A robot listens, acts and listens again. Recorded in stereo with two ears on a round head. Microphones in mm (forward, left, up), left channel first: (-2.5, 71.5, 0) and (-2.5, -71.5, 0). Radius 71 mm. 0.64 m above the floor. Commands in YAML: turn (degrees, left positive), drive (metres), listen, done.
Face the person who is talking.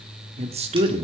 turn: -40
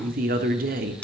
turn: -90
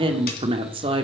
turn: -40
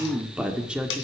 done: "Facing the woman speaking."